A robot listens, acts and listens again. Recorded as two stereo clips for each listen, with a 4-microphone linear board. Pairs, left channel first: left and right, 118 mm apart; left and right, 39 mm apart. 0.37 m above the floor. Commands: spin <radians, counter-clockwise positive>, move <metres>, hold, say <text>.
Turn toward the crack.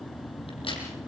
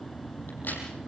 spin 0.87
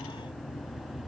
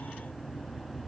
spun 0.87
hold
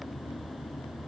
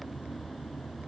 say I heard a crack, but can't make it out now. It was about straight ahead or 80° left.